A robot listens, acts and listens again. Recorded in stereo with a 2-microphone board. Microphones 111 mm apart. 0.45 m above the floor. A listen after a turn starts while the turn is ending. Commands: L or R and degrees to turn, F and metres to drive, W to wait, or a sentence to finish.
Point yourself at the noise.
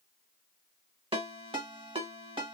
R60
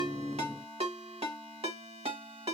R60
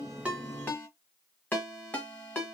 L15
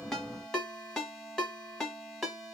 Facing the ringtone, 1 to 2 m away.